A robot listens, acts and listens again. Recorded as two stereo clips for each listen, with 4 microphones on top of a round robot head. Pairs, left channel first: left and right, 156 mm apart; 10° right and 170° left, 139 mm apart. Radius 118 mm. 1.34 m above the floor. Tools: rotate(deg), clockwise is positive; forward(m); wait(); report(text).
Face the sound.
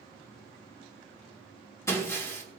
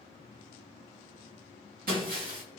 rotate(-160)
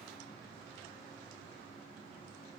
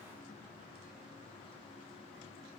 report("Facing where the breaking glass came from. I can't hear it now.")